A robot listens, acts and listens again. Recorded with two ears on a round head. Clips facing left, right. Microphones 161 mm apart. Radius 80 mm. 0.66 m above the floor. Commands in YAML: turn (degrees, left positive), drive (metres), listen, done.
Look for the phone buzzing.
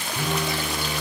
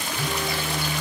turn: 90
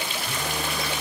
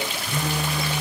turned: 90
done: "Facing the phone buzzing."